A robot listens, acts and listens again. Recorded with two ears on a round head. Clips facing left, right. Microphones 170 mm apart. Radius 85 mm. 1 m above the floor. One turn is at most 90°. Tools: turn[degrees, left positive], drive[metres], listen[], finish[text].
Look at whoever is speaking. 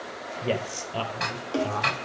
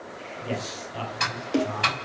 Thought: The man speaking: about 60° left or 120° left.
Action: turn[60]
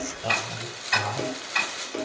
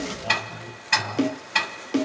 Thought: So it is at 60° left.
Action: turn[60]
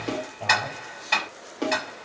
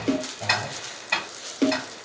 Action: listen[]
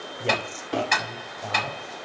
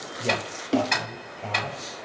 Action: finish[Facing the man speaking, over 4 m away.]